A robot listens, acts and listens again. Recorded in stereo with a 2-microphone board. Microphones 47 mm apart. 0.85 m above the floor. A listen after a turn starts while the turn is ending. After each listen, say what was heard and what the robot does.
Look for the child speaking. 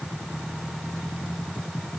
Keep listening.
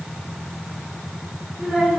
Turn 30° right.
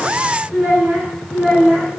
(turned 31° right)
So it is at 145° right. Turn 145° right.
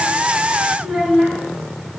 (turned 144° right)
The child speaking is now 10° right. Turn 10° right.
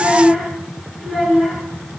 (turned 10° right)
Found it: a child speaking, straight ahead.